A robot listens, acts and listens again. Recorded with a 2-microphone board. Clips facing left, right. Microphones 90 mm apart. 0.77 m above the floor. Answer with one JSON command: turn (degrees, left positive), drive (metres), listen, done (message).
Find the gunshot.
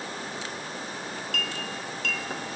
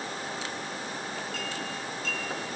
{"listen": true}
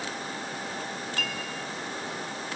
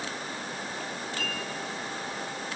{"listen": true}
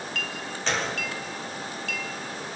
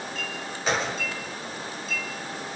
{"turn": -30}
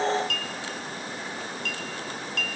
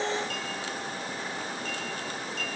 {"listen": true}
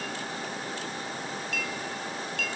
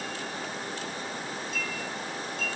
{"done": "I heard a gunshot, but can't make it out now. It was about 20° left or 140° right."}